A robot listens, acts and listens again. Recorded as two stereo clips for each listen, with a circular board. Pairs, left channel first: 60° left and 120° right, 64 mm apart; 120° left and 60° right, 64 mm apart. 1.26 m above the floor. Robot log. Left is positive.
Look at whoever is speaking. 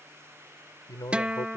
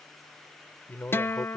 note: The man speaking: 60° left.
cmd yaw +60
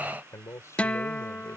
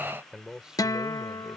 note: The man speaking is now 20° left.
cmd yaw +20
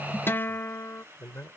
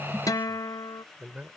end: Found it: a man speaking, straight ahead.